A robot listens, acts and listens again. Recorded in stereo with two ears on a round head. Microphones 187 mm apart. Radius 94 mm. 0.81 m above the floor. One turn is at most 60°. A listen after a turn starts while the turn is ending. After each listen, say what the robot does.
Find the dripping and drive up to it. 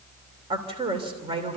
Keep listening.
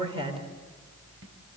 Keep listening.
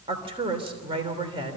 I can't make out dripping, only a woman speaking.